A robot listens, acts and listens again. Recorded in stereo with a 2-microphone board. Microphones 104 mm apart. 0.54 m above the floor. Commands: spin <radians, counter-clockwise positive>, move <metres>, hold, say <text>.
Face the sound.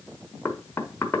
spin 0.44
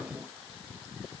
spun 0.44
hold
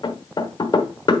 spin 2.27
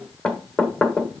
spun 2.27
spin 0.17
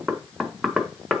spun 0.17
say Facing the knocking.